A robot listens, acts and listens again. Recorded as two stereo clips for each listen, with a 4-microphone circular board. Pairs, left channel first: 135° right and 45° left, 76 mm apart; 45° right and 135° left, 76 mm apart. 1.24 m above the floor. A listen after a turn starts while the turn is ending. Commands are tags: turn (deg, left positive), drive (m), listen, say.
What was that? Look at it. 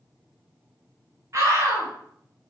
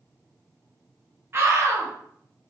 <turn deg="85"/>
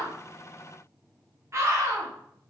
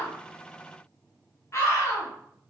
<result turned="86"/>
<say>Found it: a scream, straight ahead.</say>